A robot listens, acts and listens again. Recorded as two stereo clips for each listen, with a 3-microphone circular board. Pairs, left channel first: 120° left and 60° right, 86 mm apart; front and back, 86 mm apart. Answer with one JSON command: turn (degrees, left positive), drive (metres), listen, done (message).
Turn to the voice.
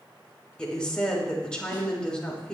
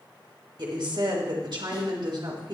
{"turn": -160}
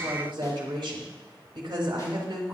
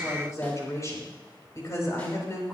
{"turn": -50}
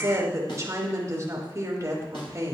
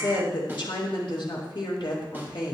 {"turn": -10}
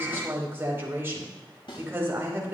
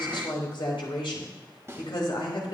{"done": "Found it: a woman speaking, straight ahead."}